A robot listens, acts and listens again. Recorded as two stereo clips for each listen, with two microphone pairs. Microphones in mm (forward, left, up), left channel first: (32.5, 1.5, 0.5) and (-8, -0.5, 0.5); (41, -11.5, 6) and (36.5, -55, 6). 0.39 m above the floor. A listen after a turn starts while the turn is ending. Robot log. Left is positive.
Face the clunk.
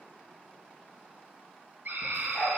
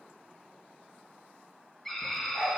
cmd idle
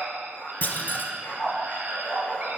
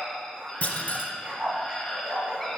note: The clunk: 35° left.
cmd yaw +35
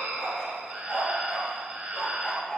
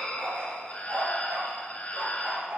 end: I heard a clunk from this way, but can't make it out now.